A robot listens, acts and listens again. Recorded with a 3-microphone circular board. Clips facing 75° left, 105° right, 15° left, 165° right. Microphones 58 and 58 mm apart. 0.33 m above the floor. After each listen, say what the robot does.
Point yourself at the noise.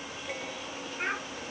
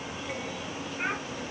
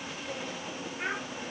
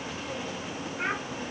Turn 175° left.
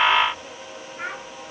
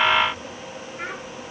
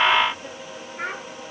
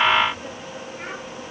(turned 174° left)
Found it: a child speaking, straight ahead, over 4 m away.